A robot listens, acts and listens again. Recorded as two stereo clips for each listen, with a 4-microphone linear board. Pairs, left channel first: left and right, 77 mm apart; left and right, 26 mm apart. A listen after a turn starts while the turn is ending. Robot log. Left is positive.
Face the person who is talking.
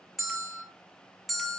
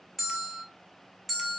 cmd idle
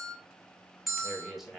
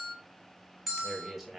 cmd yaw -30
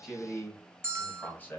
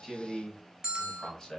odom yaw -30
note: So it is at 30° left.
cmd yaw +30
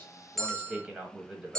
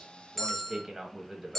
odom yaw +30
note: The man speaking is now 15° right.
cmd yaw -15
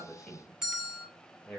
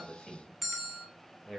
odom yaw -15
end: Facing the man speaking, 1 to 2 m away.